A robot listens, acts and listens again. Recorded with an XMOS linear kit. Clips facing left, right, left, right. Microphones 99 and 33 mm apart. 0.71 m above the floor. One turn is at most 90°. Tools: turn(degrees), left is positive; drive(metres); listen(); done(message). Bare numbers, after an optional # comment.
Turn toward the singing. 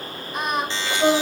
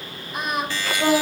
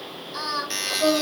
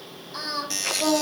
turn(-30)
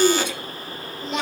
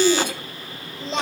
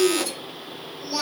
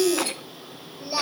# So it is at 150° right.
turn(-90)
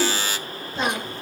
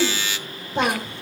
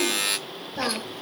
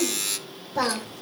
# The singing is now 65° right.
turn(-65)
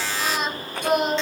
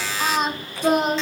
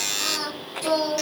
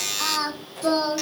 # The singing is now 35° right.
turn(-35)
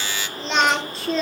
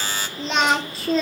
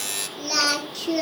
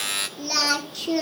done("Facing the singing.")